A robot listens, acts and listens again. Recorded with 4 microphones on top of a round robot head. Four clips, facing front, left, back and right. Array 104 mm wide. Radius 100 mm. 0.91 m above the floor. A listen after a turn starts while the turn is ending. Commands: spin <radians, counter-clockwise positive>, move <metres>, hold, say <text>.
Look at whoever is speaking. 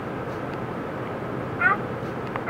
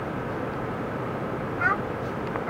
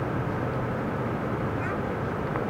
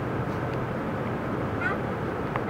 spin 0.44
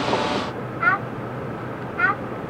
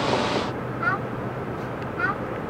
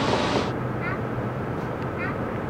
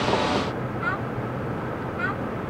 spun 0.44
spin 0.26
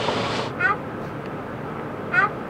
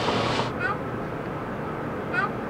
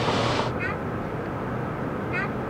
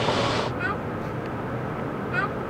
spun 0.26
say Found it: a child speaking, straight ahead.